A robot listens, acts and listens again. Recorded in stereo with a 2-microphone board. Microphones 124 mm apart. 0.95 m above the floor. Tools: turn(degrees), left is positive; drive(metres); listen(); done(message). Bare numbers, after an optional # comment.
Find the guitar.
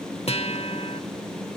# The guitar: about 55° left or 125° left.
turn(55)
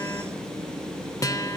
# So it is at 35° left.
turn(35)
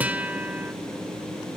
# The guitar is now 15° right.
turn(-15)
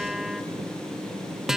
done("Found it: a guitar, straight ahead, under 1 m away.")